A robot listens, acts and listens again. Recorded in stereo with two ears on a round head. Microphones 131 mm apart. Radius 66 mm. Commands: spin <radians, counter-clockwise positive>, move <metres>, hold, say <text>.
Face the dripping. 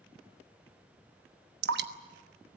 spin -1.57
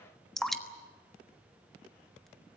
say Facing the dripping.